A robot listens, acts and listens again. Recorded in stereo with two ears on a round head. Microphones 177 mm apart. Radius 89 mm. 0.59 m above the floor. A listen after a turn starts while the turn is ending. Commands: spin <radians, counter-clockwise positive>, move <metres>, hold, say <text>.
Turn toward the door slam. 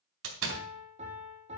spin -1.22
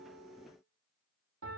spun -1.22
hold
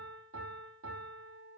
say I heard a door slam, but can't make it out now. It was about straight ahead or 40° right.